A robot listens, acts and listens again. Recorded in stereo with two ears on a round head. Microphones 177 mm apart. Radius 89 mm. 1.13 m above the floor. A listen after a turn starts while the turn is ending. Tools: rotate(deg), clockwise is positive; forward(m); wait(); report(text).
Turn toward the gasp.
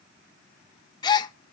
rotate(-20)
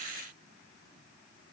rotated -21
wait()
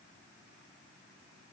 report("I heard a gasp, but can't make it out now. It was about straight ahead or 140° left.")